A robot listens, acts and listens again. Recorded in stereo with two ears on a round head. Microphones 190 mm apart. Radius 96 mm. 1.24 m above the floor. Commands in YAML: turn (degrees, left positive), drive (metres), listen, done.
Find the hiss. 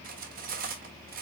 listen: true
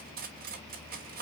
listen: true
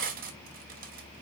done: "I can't make out a hiss, only cutlery clinking."